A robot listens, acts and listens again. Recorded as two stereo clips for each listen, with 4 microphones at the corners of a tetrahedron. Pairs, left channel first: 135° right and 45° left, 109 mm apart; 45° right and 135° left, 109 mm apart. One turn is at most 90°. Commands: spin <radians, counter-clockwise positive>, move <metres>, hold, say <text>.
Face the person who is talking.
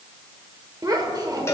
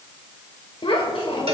spin -0.17
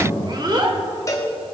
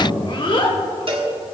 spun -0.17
say Facing the child speaking, 1 to 2 m away.